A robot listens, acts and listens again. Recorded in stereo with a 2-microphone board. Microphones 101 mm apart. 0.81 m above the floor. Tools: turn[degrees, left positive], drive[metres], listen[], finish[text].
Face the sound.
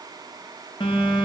Thought: The phone buzzing: about 55° left or 125° left.
Action: turn[55]
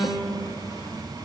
Thought: So it is at 50° left.
Action: turn[50]
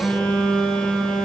Thought: The phone buzzing is now 15° left.
Action: turn[15]
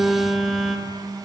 Action: finish[Facing the phone buzzing.]